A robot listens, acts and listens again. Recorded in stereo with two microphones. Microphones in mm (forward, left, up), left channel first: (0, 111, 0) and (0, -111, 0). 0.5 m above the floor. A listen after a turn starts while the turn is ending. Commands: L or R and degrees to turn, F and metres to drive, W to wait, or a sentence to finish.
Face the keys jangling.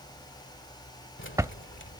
L65
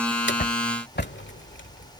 L55
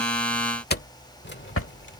L50
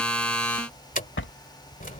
L40
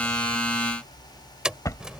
Found it: keys jangling, straight ahead.